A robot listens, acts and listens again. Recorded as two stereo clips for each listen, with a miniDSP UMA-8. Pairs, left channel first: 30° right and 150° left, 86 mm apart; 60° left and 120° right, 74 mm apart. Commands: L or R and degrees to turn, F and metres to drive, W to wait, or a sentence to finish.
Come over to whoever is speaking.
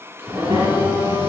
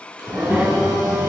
L170
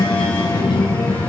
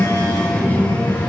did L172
F1.0
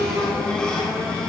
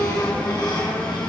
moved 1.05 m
R10
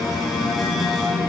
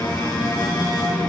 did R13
F1.0
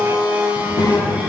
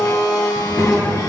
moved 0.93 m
F1.0
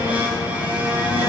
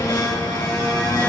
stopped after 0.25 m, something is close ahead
Arrived at the child speaking, straight ahead.